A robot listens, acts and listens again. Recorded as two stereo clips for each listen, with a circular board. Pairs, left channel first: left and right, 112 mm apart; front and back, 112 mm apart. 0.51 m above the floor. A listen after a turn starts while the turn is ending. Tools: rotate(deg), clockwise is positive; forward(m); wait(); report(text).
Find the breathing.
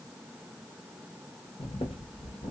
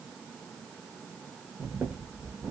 rotate(-110)
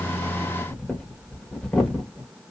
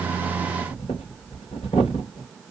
rotate(-10)
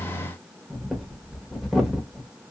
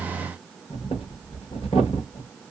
report("Facing the breathing.")